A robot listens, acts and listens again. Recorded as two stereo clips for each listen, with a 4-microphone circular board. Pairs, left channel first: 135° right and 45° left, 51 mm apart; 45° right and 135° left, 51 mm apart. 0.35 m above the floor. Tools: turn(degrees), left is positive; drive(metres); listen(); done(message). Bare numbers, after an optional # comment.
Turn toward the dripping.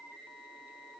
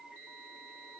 listen()
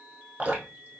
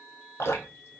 # The dripping: 15° right.
turn(-15)
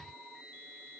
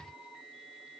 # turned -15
listen()
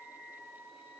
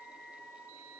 listen()
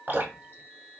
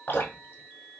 done("Found it: dripping, straight ahead, 1 to 2 m away.")